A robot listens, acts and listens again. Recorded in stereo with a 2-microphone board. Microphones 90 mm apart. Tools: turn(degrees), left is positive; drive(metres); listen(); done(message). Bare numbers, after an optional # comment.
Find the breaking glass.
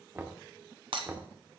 # The breaking glass: about 75° right or 105° right.
turn(-75)
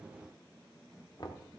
listen()
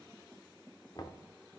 done("I heard breaking glass, but can't make it out now. It was about straight ahead or 30° right.")